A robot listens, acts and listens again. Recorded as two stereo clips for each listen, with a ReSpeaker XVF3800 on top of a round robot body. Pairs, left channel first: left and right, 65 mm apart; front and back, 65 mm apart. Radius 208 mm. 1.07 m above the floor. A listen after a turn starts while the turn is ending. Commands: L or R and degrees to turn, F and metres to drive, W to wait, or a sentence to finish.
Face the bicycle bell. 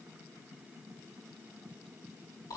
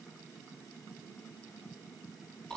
W
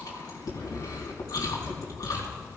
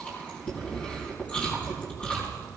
W
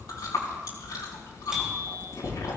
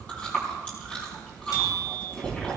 R10
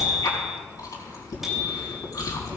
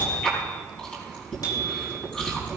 Facing the bicycle bell.